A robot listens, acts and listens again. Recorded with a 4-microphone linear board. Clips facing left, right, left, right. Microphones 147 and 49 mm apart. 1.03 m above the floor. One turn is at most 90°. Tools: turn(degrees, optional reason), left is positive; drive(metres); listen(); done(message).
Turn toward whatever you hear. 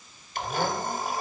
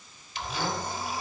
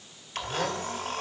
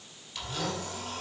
turn(degrees=50, reason="The blender: about 50° left or 130° left.")
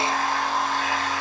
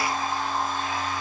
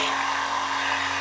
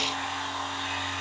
turn(degrees=80, reason="So it is at 80° left.")
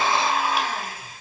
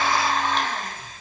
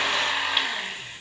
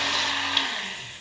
turn(degrees=10, reason="The blender is now 10° left.")
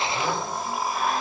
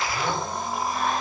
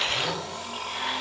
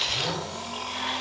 done("Found it: a blender, straight ahead.")